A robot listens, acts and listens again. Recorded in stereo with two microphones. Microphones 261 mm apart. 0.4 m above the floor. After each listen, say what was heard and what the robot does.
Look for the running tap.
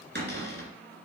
Keep listening.
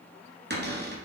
Keep listening.
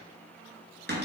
I can't make out a running tap to turn to.